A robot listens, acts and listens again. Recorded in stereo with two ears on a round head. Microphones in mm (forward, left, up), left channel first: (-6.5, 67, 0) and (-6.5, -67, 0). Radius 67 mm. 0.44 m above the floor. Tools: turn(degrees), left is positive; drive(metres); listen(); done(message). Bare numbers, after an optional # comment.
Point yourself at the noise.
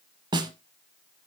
# The snare drum: about 30° right or 150° right.
turn(-30)
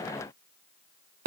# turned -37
# So it is at 115° right.
turn(-115)
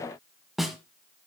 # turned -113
done("Found it: a snare drum, straight ahead, 1 to 2 m away.")